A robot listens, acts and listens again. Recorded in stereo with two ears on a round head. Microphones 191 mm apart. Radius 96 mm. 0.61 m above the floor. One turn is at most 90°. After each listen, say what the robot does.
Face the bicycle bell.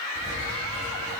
Keep listening.
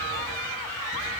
Keep listening.
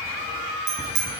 Turn 55° right.
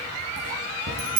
Turn 70° right.
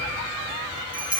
Found it: a bicycle bell, straight ahead.